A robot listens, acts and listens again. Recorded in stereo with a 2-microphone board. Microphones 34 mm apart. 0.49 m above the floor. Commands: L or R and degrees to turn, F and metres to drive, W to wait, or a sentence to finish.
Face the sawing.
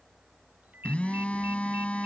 W
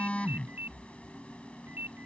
W
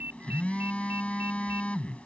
I can't make out sawing, only a ringtone and a phone buzzing.